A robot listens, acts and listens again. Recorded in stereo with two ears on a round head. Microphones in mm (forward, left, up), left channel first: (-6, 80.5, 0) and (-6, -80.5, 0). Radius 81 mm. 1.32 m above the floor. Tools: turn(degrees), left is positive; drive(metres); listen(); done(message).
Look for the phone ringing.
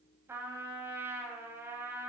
listen()
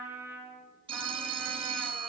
turn(degrees=-30)
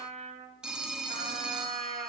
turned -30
done("Facing the phone ringing.")